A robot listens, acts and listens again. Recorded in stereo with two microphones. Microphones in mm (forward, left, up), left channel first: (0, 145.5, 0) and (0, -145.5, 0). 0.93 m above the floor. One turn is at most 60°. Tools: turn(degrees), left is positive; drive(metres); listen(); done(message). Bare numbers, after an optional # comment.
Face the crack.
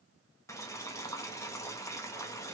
listen()
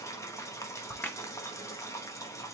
turn(30)
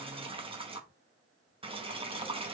listen()
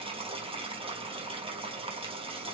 done("I heard a crack, but can't make it out now. It was about 25° right or 145° left.")